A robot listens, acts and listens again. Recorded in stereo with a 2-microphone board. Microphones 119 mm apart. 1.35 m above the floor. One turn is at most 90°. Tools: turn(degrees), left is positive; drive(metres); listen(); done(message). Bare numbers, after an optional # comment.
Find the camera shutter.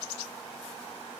listen()
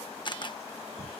# The camera shutter: about 40° left or 140° left.
turn(40)
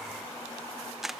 done("Facing the camera shutter.")